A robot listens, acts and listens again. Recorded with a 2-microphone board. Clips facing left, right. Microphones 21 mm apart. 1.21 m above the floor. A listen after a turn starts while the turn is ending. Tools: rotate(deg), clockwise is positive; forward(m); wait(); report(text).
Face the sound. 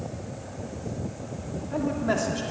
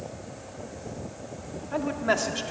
rotate(25)
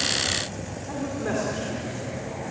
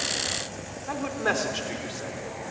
rotate(135)
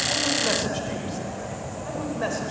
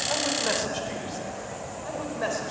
report("Facing the man speaking.")